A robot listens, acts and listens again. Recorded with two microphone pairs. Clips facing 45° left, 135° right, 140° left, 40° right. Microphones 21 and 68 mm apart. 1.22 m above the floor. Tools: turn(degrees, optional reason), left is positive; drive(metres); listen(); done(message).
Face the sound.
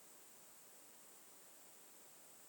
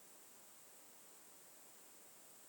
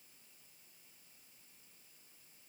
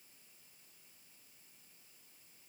listen()
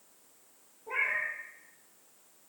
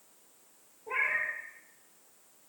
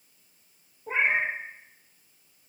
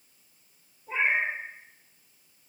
turn(degrees=135, reason="The cat meowing: 135° left.")
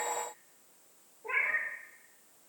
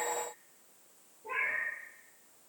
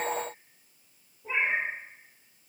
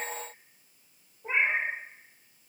done("Found it: a cat meowing, straight ahead.")